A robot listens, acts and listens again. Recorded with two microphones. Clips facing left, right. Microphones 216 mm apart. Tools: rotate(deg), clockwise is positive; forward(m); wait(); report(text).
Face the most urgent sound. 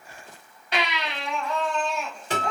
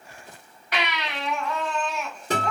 rotate(-30)
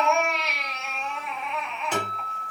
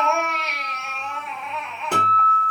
report("Found it: a baby crying, straight ahead, 1 to 2 m away.")